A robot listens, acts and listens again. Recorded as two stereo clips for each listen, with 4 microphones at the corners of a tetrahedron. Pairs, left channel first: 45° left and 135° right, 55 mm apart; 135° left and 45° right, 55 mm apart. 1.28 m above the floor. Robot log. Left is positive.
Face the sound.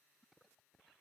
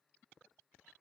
cmd idle
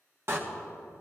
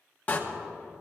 note: The door slam: 165° right.
cmd yaw -165
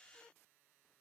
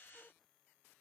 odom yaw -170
end: I heard a door slam from this way, but can't make it out now.